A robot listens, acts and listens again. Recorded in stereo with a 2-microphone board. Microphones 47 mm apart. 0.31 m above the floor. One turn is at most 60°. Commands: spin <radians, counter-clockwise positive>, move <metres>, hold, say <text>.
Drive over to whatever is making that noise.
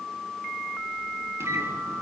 spin -1.05
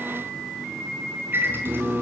spin -0.87
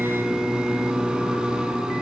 spin -0.26
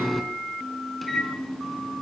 move 1.0
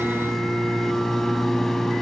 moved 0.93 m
move 1.0
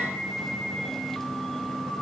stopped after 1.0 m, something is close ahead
say Arrived at the microwave, straight ahead.